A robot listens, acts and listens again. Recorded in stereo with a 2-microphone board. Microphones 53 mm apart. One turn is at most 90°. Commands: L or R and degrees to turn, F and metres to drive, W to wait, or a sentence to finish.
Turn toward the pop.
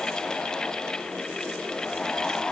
W
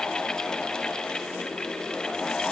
W
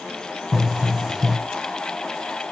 R30
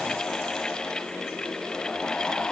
W
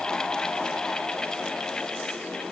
I heard a pop, but can't make it out now. It was about 25° left or 145° right.